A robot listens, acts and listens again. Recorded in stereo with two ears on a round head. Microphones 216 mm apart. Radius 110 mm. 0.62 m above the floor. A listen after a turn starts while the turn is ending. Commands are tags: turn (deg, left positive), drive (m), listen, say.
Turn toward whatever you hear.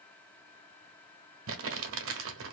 <turn deg="-60"/>
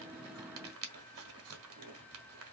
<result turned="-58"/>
<turn deg="-60"/>
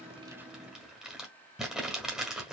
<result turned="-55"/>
<say>Found it: crumpling, straight ahead.</say>